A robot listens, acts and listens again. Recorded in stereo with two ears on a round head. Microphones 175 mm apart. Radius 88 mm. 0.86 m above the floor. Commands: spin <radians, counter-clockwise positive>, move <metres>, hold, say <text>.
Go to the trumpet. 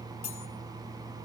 hold
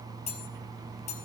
hold
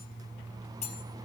say I can't make out a trumpet, only cutlery clinking.